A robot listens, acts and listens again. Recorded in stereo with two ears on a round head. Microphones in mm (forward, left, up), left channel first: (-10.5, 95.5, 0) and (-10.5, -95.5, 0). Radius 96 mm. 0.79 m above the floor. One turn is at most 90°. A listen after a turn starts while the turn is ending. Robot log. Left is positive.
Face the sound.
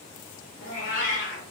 note: The cat meowing: about 35° left or 145° left.
cmd yaw +35
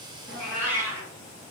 note: So it is at 15° right.
cmd yaw -15
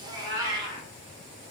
note: The cat meowing is now 20° right.
cmd yaw -20
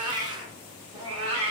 note: The cat meowing is now 30° right.
cmd yaw -30
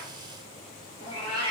note: The cat meowing is now 20° right.
cmd yaw -20
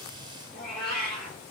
end: Facing the cat meowing, 2 to 4 m away.